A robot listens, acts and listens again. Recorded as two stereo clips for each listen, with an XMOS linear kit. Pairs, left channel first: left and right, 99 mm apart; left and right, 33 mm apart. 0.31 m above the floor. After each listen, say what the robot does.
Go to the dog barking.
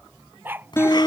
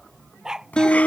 Turn 20° right.
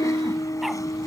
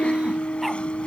Keep listening.
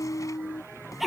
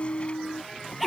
Drive 1.0 m forward.
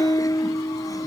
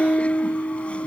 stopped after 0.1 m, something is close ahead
Keep listening.
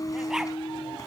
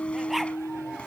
Keep listening.
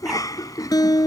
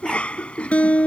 I heard a dog barking from this way, but can't make it out now. I did not reach it.